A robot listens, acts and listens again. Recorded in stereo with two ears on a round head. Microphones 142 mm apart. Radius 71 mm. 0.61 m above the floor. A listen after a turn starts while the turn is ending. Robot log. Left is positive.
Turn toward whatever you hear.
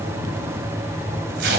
note: The tape being pulled: about 70° right or 110° right.
cmd yaw -70
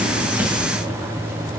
cmd idle
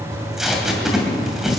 end: Found it: tape being pulled, straight ahead, 2 to 4 m away.